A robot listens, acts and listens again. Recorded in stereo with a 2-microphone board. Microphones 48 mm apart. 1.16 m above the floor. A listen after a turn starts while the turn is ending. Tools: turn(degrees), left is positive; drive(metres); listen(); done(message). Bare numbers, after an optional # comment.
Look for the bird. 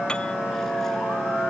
listen()
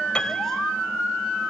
listen()
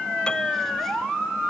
done("I can't make out a bird to turn to.")